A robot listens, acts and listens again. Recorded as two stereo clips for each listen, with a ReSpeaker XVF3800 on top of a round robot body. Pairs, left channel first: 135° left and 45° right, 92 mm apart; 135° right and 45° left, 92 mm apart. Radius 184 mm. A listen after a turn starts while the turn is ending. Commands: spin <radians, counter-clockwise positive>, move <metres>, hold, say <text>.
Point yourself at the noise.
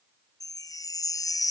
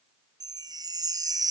spin 1.57
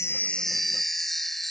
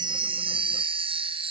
spin 0.79
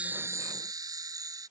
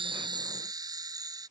say Found it: a chime, straight ahead.